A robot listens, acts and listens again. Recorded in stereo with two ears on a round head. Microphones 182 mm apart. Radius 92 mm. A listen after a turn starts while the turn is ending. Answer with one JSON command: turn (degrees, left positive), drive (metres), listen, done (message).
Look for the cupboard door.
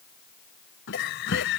{"turn": 60}
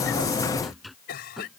{"done": "Found it: a cupboard door, straight ahead."}